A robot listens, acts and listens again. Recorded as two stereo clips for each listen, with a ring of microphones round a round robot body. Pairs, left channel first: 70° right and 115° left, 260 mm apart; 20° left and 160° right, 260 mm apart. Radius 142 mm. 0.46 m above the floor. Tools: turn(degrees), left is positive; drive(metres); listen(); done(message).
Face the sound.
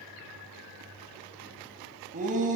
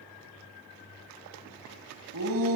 turn(degrees=170)
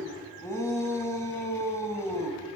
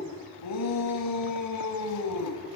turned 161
turn(degrees=10)
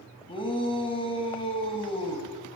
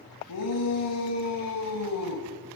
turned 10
done("Facing the shout, 2 to 4 m away.")